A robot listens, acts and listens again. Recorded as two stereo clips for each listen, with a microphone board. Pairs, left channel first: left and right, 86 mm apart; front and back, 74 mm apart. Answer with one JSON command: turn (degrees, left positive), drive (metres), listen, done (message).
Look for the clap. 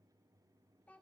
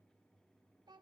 {"listen": true}
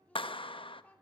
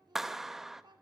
{"turn": 95}
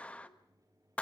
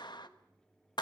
{"turn": 15}
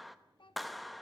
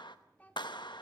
{"done": "Found it: a clap, straight ahead."}